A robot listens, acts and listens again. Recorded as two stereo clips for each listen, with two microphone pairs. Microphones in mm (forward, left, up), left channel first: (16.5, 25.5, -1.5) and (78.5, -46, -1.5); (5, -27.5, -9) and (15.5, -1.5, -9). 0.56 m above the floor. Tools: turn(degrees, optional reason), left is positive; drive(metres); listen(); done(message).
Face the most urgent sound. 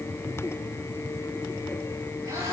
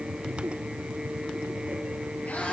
listen()
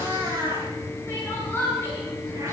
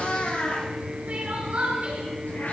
turn(degrees=65, reason="The crying: 65° left.")
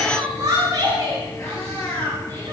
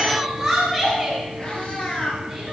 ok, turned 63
done("Found it: crying, straight ahead.")